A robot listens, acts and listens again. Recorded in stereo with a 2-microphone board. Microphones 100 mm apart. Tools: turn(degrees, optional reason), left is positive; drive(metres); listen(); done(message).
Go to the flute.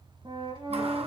turn(degrees=-60, reason="The flute: about 60° right or 120° right.")
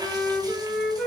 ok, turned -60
drive(metres=1.0)
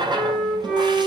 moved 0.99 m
drive(metres=1.0)
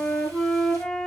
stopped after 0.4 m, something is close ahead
done("I am next to the flute.")